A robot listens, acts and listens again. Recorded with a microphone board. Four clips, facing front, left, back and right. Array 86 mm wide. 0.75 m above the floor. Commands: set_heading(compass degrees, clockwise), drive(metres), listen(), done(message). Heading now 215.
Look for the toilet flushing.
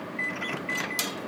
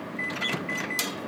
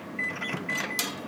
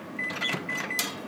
listen()
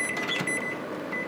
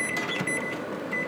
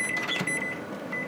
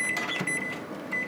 listen()
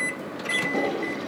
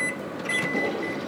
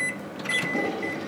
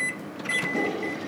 set_heading(190)
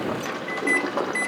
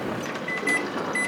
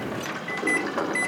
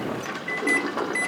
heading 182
set_heading(192)
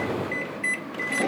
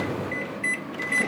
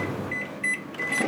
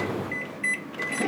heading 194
done("Found it: a toilet flushing, straight ahead, over 4 m away.")